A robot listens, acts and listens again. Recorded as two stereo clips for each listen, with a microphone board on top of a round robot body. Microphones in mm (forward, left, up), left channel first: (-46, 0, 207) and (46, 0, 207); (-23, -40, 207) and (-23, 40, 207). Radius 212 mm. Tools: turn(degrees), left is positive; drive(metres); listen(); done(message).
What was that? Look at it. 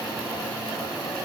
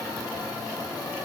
listen()
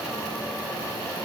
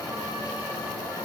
listen()
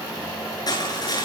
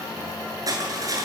turn(degrees=135)
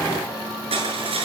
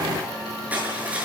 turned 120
turn(degrees=15)
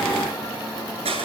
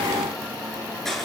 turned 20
done("Facing the crushing, over 4 m away.")